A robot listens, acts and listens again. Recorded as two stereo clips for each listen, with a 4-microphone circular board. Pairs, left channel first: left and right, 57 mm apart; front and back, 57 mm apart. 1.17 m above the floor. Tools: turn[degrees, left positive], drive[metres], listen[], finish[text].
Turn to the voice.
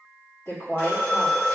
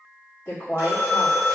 Thought: The woman speaking: 50° left.
Action: turn[50]
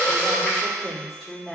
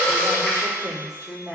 Action: finish[Facing the woman speaking, 1 to 2 m away.]